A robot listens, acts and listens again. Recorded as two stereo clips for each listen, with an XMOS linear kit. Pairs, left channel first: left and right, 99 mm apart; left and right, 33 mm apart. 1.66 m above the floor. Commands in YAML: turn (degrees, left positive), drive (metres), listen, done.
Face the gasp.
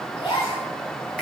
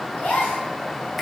turn: 55
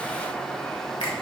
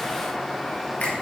listen: true
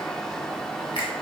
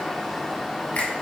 done: "I heard a gasp, but can't make it out now. It was about straight ahead or 70° left."